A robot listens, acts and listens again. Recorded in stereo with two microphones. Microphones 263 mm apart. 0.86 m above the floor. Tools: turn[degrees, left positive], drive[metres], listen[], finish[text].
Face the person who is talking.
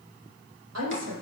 Thought: The woman speaking: about 75° right or 105° right.
Action: turn[-75]
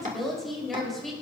Action: finish[Facing the woman speaking, over 4 m away.]